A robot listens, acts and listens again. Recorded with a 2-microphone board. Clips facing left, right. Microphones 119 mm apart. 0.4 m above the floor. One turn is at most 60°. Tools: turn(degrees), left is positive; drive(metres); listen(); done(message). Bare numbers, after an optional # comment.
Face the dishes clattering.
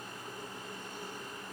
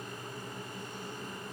listen()
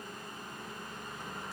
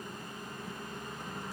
listen()
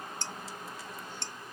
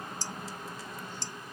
# The dishes clattering: about 55° left or 125° left.
turn(55)
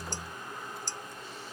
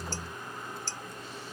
# So it is at 15° left.
turn(15)
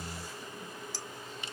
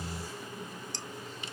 done("Facing the dishes clattering, under 1 m away.")